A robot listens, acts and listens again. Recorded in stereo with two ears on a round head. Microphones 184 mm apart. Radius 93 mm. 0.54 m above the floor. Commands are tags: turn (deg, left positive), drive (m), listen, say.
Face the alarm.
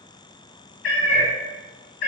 <listen/>
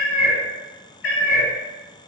<listen/>
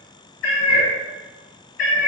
<say>I can't make out an alarm to turn to.</say>